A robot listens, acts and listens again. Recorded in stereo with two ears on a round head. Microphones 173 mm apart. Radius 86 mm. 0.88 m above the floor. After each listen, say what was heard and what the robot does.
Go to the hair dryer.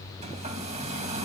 The hair dryer: about 35° right or 145° right. Turn 35° right.
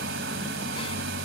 So it is at 110° right. Turn 110° right.
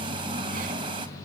The hair dryer is now 25° right. Turn 25° right.
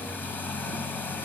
The hair dryer is now 10° left. Turn 10° left.
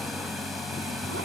Drive 1.0 m forward.
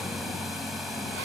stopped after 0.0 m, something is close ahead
Something is in my way. I am facing the hair dryer but have not reached it.